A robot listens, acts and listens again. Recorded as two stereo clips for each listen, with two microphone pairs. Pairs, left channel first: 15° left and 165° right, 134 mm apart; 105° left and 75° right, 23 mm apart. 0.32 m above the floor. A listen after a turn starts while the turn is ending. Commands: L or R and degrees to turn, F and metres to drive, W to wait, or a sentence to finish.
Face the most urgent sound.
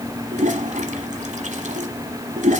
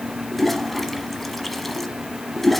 W
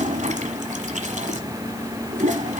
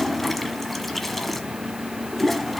W
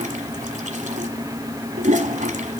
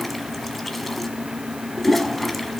I can't make out anything urgent, only a toilet flushing.